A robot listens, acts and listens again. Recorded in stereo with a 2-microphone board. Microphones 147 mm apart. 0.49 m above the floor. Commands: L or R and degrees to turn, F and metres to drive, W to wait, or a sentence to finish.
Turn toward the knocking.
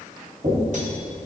R55
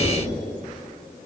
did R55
W
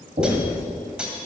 R70
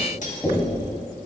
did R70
Found it: knocking, straight ahead, 2 to 4 m away.